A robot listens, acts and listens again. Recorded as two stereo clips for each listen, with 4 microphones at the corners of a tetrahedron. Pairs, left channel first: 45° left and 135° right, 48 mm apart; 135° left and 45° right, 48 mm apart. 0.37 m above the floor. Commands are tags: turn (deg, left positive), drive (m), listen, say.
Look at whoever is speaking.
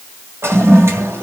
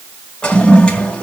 <listen/>
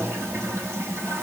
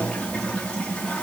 <listen/>
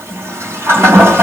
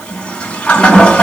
<say>I can't make out anyone speaking, only a toilet flushing.</say>